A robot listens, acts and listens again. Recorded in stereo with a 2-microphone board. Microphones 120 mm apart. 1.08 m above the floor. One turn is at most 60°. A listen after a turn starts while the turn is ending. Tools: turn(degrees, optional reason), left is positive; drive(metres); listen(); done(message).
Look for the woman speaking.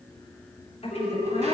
turn(degrees=55, reason="The woman speaking: about 55° left or 125° left.")
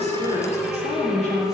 turn(degrees=60, reason="So it is at 70° left.")
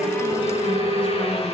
turn(degrees=10, reason="Nothing new. It was at 10° left.")
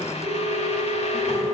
listen()
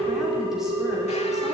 done("Facing where the woman speaking came from. I can't hear it now.")